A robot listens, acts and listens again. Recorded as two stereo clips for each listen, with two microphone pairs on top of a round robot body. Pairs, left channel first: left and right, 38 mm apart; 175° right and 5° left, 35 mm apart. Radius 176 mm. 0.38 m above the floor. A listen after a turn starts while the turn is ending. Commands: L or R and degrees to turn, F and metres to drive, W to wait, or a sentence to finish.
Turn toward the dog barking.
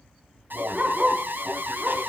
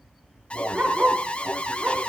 R50
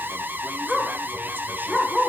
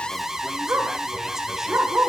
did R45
R20
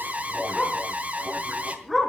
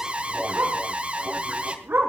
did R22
R10
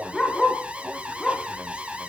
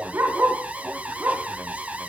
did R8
Found it: a dog barking, straight ahead, 2 to 4 m away.